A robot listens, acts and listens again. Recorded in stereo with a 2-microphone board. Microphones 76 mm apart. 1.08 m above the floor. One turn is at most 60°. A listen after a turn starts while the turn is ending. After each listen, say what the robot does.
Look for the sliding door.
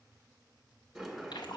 Turn 30° left.
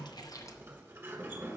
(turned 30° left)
Turn 30° right.
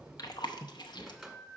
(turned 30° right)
Facing the sliding door.